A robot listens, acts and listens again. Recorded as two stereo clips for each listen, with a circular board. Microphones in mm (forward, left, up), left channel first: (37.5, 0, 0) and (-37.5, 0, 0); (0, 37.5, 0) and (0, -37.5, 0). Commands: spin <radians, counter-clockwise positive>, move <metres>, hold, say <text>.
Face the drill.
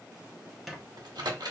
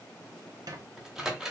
hold
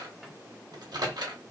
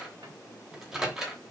hold
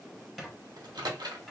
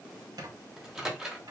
say I can't make out a drill to turn to.